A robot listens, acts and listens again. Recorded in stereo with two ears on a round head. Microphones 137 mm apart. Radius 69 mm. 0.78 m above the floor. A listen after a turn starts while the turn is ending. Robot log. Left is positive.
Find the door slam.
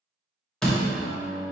cmd yaw +30
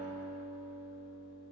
cmd idle
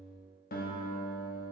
end: I heard a door slam, but can't make it out now. It was about 25° right or 145° left.